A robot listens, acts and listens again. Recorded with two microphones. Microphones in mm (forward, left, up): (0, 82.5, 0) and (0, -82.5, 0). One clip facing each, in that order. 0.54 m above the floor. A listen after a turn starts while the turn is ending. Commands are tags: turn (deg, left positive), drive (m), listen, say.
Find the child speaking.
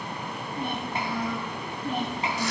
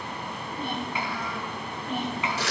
<turn deg="35"/>
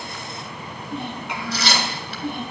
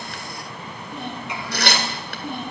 <turn deg="125"/>
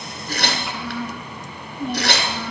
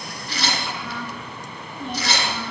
<say>Facing the child speaking, over 4 m away.</say>